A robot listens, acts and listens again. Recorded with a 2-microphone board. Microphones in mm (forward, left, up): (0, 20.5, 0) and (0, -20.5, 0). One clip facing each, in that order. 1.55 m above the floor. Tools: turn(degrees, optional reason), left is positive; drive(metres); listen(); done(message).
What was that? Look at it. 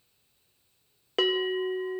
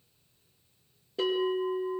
turn(degrees=90)
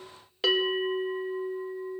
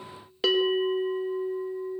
done("Found it: a bell, straight ahead.")